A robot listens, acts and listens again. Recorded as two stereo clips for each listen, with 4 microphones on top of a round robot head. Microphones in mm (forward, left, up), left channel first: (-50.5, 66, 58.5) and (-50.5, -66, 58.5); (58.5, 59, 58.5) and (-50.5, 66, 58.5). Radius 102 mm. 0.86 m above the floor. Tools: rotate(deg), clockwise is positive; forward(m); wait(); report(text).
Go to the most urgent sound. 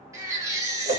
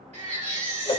rotate(160)
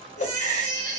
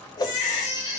rotate(55)
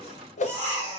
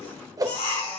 rotate(-10)
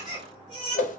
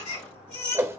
forward(1.0)
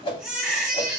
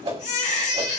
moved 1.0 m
forward(1.0)
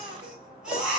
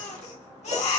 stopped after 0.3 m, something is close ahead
report("I am next to the baby crying.")